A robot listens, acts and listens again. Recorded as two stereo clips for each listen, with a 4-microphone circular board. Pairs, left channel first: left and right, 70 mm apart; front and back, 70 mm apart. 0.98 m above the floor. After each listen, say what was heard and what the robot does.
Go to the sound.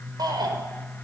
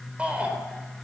The shout: 110° right. Turn 110° right.
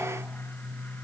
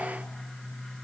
Keep listening.
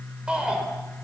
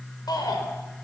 The shout is now 10° right. Turn 10° right.
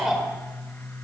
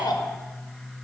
Drive 1.0 m forward.
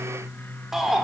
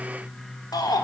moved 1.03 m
Drive 1.0 m forward.
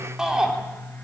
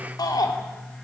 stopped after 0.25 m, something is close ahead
The shout is now 10° right. Turn 10° right.
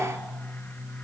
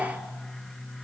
Keep listening.
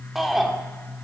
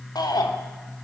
Something is in my way. I am facing the shout but have not reached it.